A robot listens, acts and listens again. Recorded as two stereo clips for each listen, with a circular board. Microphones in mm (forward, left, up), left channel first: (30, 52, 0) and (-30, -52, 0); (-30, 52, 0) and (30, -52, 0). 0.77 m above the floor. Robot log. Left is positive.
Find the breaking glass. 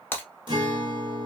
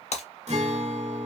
note: The breaking glass: 130° left.
cmd yaw +130
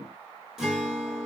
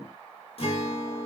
end: Facing where the breaking glass came from. I can't hear it now.